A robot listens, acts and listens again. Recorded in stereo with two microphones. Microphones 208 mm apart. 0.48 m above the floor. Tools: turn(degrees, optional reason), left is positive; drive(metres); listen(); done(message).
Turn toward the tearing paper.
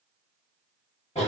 listen()
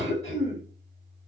listen()
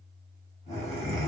done("I can't make out tearing paper to turn to.")